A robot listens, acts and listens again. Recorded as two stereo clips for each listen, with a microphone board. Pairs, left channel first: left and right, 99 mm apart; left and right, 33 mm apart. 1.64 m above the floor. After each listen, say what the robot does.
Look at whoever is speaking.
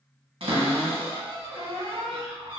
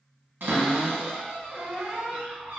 Keep listening.
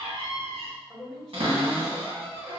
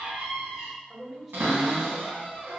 Turn 30° left.
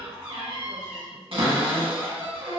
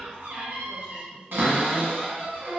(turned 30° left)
Keep listening.
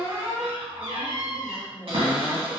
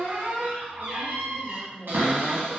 Turn 25° right.
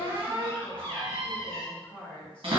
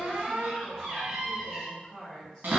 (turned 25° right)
Turn 15° left.
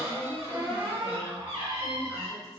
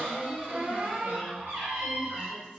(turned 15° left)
Facing the woman speaking, 1 to 2 m away.